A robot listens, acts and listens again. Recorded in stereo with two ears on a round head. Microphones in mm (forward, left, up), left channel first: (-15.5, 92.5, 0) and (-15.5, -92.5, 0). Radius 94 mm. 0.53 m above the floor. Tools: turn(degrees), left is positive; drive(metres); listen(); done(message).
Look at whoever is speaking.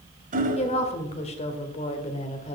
turn(degrees=30)
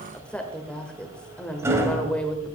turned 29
done("Facing the woman speaking.")